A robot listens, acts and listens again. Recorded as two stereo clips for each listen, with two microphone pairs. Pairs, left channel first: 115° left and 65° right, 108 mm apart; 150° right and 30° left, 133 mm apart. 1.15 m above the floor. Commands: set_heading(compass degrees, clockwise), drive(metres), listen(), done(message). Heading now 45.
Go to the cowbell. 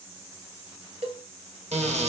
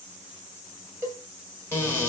set_heading(85)
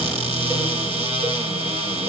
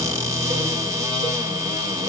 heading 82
listen()
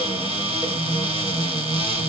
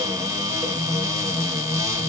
listen()
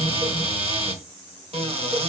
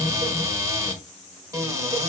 done("Facing where the cowbell came from. I can't hear it now. I did not reach it.")